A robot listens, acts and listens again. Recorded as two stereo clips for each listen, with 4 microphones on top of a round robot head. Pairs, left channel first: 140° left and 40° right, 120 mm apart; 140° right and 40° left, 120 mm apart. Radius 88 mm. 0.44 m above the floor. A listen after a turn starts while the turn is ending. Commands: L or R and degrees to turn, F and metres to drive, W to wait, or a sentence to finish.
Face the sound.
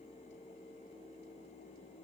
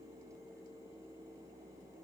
W
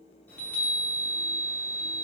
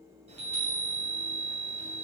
L65
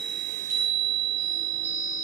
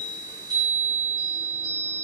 R15
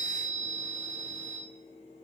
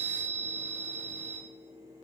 Facing the chime, 2 to 4 m away.